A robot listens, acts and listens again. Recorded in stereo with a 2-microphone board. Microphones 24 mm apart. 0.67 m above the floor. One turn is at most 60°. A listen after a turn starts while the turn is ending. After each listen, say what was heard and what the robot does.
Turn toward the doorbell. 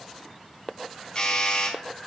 The doorbell: about 50° left or 130° left. Turn 50° left.
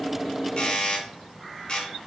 So it is at 65° left. Turn 60° left.
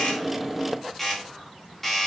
The doorbell is now 20° left. Turn 20° left.
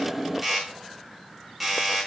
Facing the doorbell, 2 to 4 m away.